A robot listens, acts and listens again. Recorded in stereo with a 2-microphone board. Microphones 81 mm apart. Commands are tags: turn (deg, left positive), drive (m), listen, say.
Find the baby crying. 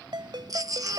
<turn deg="-45"/>
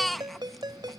<say>Found it: a baby crying, straight ahead.</say>